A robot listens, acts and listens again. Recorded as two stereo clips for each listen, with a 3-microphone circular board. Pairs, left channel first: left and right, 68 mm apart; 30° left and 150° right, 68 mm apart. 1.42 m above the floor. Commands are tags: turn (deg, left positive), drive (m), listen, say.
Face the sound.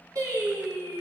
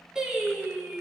<turn deg="-75"/>
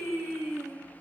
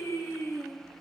<turn deg="-10"/>
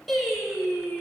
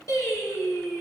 <say>Found it: singing, straight ahead.</say>